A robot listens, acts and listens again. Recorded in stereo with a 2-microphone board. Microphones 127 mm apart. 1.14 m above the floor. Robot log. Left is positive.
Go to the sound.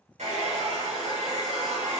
cmd yaw -90
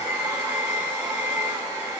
note: So it is at 15° right.
cmd yaw -15
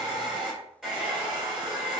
cmd fwd 1.0
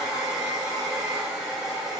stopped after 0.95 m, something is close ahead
end: Arrived at the hair dryer, straight ahead.